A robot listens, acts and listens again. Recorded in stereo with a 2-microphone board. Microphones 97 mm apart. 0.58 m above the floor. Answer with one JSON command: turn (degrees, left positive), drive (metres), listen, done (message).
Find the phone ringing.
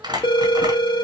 {"turn": 55}
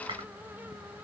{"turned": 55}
{"listen": true}
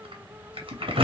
{"listen": true}
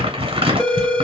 {"done": "Facing the phone ringing."}